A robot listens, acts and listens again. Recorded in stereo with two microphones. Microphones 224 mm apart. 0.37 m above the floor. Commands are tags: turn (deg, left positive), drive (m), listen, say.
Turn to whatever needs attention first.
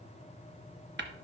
<listen/>
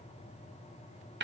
<listen/>
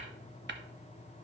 <say>I can't make out anything urgent, only tapping.</say>